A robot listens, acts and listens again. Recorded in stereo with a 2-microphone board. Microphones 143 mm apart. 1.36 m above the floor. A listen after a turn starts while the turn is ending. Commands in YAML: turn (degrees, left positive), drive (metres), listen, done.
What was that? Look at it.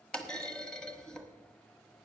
turn: 30
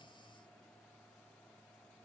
listen: true
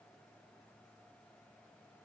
done: "I heard a clunk, but can't make it out now. It was about 25° right or 145° left."